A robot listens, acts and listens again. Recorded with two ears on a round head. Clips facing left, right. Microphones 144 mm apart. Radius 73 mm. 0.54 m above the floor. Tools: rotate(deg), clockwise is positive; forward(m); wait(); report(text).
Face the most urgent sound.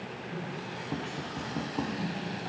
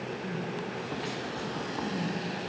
rotate(45)
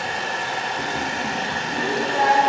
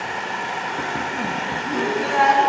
rotate(95)
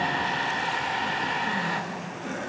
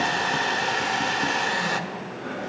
rotate(-10)
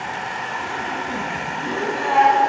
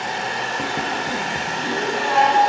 report("Found it: crying, straight ahead.")